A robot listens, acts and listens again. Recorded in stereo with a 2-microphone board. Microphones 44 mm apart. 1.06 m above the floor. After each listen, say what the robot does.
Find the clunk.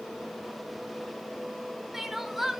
Keep listening.
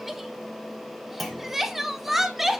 Turn 30° left.
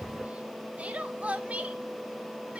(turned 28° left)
Keep listening.
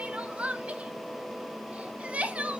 I heard a clunk, but can't make it out now. It was about 25° right or 150° left.